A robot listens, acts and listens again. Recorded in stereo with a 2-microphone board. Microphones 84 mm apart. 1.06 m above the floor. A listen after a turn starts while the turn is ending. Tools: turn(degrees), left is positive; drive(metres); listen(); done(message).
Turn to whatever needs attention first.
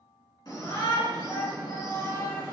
turn(degrees=60)
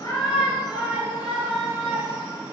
done("Facing the shout, 1 to 2 m away.")